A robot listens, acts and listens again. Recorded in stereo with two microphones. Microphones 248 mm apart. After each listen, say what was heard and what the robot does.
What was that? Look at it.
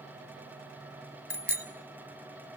The bicycle bell: about 45° right or 135° right. Turn 45° right.
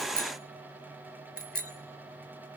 Facing the bicycle bell, 2 to 4 m away.